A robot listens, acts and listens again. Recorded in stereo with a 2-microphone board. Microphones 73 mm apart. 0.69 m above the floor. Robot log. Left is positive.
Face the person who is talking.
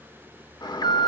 cmd idle
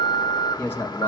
note: The man speaking: about 30° left or 150° left.
cmd yaw +30
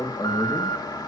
note: So it is at 125° left.
cmd yaw +125
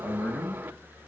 note: The man speaking is now 30° left.
cmd yaw +30
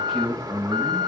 end: Facing the man speaking, over 4 m away.